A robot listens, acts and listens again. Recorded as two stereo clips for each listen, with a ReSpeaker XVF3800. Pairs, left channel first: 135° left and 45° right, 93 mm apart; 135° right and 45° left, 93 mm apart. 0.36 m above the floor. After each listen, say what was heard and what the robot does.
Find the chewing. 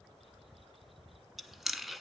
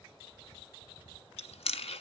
The chewing: 130° right. Turn 130° right.
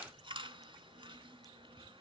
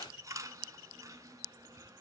The chewing is now 10° right. Turn 10° right.
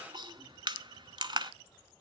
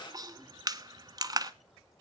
Facing the chewing, under 1 m away.